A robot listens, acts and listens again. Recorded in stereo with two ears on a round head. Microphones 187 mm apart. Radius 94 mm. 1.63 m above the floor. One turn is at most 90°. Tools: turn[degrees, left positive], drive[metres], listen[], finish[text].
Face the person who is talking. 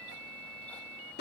Action: listen[]
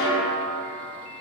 Action: listen[]
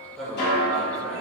Action: turn[30]
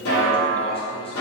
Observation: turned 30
Thought: So it is at 150° left.
Action: turn[90]
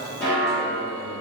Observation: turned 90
Thought: The man speaking is now 60° left.
Action: turn[60]
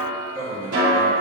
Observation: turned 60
Thought: The man speaking is now 10° right.
Action: turn[-10]
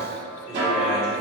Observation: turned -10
Action: listen[]
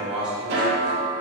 Action: finish[Facing the man speaking, 1 to 2 m away.]